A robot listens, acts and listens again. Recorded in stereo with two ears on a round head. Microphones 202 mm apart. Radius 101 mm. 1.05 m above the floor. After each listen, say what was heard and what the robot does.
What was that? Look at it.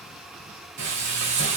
The frying: about 55° right or 125° right. Turn 55° right.
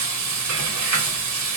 So it is at 70° right. Turn 70° right.
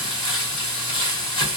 The frying is now 20° left. Turn 20° left.
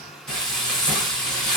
Facing the frying.